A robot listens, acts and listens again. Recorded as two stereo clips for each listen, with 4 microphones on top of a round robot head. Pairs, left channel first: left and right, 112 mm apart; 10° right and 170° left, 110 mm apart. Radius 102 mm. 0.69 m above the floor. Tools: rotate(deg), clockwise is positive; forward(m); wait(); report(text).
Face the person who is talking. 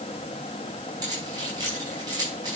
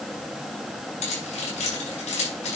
wait()
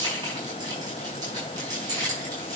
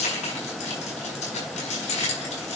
wait()
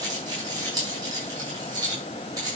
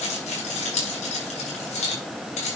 report("I can't make out anyone speaking, only keys jangling.")